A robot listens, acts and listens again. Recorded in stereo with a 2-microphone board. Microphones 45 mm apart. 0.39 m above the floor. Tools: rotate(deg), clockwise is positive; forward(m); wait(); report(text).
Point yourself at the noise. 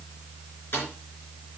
rotate(-55)
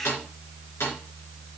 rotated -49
rotate(-75)
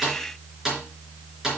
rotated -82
rotate(10)
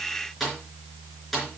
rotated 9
report("Found it: a snare drum, straight ahead.")